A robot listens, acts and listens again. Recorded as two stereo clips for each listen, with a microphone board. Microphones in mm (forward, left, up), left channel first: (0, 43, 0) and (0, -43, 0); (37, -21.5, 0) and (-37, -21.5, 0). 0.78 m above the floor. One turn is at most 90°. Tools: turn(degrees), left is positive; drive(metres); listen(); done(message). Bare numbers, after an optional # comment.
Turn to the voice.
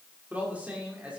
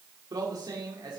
# The man speaking: 165° right.
turn(-90)
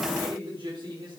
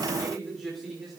# The man speaking is now 95° right.
turn(-90)
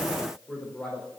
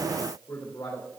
# The man speaking is now 15° left.
turn(15)
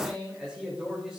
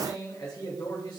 done("Found it: a man speaking, straight ahead.")